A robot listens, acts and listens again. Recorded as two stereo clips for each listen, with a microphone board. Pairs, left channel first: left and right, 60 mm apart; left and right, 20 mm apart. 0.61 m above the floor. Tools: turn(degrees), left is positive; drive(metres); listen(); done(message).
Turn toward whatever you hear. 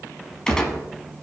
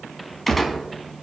turn(degrees=30)
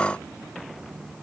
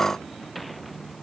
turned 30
listen()
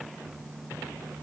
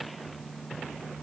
done("I heard a gunshot, but can't make it out now. It was about 15° right or 135° left.")